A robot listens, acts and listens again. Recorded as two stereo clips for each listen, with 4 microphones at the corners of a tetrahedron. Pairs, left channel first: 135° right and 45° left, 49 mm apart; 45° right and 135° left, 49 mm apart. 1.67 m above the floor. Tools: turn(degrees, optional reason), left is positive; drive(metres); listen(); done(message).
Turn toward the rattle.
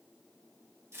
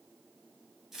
listen()
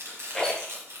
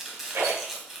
turn(degrees=150, reason="The rattle: 150° left.")
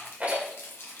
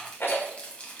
turn(degrees=-10, reason="The rattle is now 10° right.")
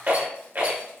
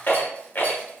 done("Facing the rattle, 1 to 2 m away.")